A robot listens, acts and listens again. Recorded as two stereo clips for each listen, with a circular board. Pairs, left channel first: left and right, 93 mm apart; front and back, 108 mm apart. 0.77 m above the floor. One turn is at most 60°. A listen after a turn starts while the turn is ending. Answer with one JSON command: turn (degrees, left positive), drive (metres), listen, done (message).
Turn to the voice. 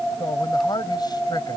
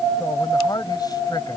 {"turn": 50}
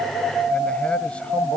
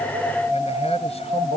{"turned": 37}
{"turn": 15}
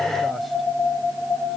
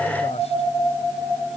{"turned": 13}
{"listen": true}
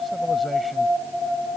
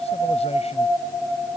{"done": "I heard a man speaking from this way, but can't make it out now."}